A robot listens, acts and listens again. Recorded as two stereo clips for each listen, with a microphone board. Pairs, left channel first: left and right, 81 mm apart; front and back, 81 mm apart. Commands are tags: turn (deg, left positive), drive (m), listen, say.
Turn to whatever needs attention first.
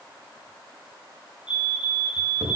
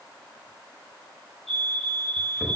<turn deg="85"/>
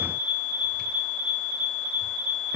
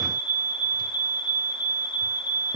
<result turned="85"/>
<say>Found it: a fire alarm, straight ahead.</say>